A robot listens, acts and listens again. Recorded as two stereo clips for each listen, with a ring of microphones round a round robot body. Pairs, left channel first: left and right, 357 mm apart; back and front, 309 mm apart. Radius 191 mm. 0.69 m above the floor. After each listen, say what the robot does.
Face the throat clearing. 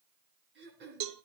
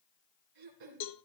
Turn 30° right.
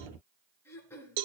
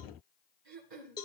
Facing the throat clearing, 2 to 4 m away.